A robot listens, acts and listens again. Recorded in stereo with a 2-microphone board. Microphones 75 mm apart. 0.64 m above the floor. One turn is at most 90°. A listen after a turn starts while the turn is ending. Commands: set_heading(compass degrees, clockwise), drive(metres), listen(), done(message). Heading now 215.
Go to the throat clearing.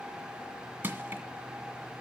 listen()
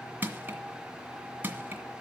listen()
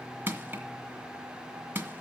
done("I can't make out throat clearing, only crushing.")